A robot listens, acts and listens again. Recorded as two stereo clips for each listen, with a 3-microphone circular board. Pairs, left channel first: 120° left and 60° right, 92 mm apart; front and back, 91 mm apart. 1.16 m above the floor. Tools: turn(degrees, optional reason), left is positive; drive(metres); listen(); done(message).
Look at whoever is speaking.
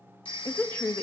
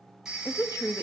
turn(degrees=45, reason="The woman speaking: 45° left.")
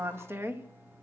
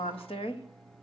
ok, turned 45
done("Found it: a woman speaking, straight ahead, 1 to 2 m away.")